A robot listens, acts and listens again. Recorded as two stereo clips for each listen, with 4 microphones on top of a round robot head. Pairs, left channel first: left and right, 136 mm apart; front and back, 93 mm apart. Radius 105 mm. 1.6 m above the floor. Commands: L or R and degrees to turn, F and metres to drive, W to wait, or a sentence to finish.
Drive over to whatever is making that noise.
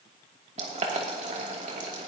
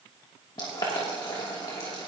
R55
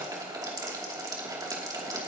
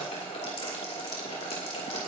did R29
R25
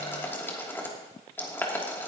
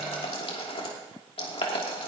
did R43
L15
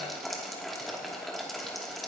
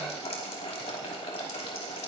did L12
F1.0
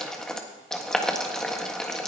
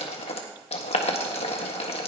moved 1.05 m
F1.0
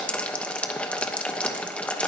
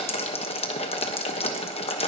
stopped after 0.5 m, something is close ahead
L10
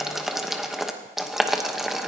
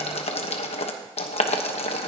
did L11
I am next to the boiling.